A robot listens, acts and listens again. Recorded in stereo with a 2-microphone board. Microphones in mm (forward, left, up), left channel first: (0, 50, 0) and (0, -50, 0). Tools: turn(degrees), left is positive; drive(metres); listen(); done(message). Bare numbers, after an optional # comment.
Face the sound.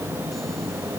listen()
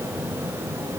listen()
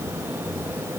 done("I can't make out anything.")